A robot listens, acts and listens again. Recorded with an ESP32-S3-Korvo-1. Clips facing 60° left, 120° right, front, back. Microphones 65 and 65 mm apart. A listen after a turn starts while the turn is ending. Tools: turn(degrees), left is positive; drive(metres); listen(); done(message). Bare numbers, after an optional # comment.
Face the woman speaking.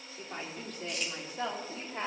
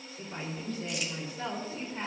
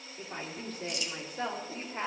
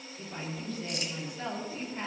# The woman speaking: 45° left.
turn(45)
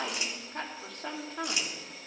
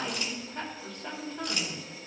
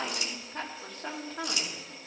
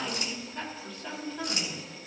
# The woman speaking is now 45° left.
turn(45)
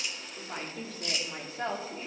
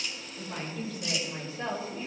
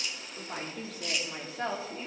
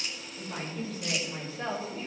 # The woman speaking is now 25° left.
turn(25)
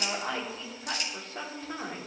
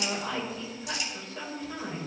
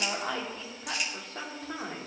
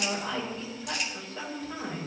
# The woman speaking is now 25° left.
turn(25)
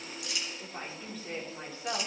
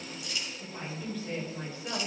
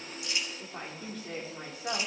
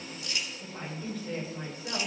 done("Found it: a woman speaking, straight ahead, 2 to 4 m away.")